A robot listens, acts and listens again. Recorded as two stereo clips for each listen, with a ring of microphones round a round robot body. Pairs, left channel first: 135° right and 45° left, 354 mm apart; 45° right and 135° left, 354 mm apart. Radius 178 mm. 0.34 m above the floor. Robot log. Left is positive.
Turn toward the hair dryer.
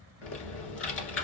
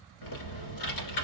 cmd idle
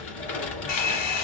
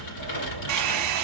note: The hair dryer: 175° left.
cmd yaw +175
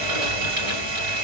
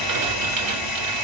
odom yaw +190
note: The hair dryer is now 10° right.
cmd yaw -10
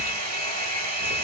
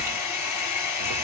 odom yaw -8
end: Found it: a hair dryer, straight ahead, 1 to 2 m away.